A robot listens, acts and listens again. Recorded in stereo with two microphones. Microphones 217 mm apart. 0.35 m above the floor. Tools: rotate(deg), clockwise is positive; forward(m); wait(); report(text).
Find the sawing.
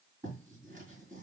wait()
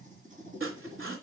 rotate(70)
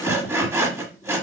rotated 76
rotate(15)
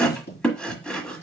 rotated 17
report("Facing the sawing, 1 to 2 m away.")